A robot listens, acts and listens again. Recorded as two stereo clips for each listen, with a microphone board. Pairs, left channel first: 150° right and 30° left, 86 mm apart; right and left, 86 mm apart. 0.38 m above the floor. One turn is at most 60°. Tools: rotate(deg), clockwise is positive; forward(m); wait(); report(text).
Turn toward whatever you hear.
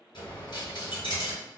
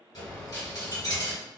rotate(60)
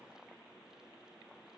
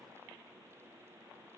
rotate(60)
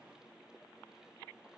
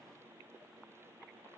rotate(10)
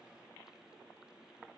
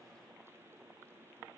report("Facing where the dropped coin came from. I can't hear it now.")